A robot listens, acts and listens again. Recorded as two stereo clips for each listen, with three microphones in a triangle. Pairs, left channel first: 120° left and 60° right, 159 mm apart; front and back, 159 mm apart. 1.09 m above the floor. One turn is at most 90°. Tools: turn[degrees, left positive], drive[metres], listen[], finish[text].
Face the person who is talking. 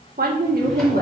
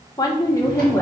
Thought: The woman speaking: 75° right.
Action: turn[-75]
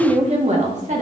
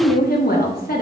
Thought: The woman speaking is now 20° right.
Action: turn[-20]
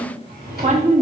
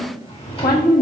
Thought: The woman speaking is now 20° right.
Action: turn[-20]
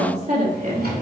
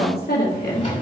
Thought: The woman speaking is now 20° right.
Action: turn[-20]
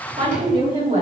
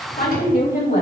Thought: The woman speaking is now 10° right.
Action: turn[-10]
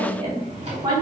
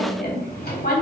Action: finish[Found it: a woman speaking, straight ahead, 2 to 4 m away.]